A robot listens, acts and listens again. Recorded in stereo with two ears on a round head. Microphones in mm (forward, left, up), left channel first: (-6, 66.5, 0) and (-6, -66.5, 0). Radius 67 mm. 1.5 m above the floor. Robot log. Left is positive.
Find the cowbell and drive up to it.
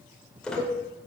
note: The cowbell: about 65° right or 115° right.
cmd yaw -65
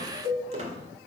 note: So it is at 55° right.
cmd yaw -55
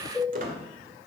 cmd fwd 1.0
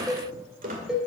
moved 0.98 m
cmd fwd 1.0
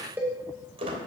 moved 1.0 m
note: The cowbell is now 10° right.
cmd yaw -10
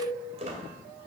cmd fwd 1.0
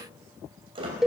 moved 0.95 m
cmd fwd 1.0
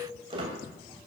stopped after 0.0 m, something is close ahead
cmd idle
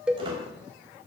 end: I am next to the cowbell.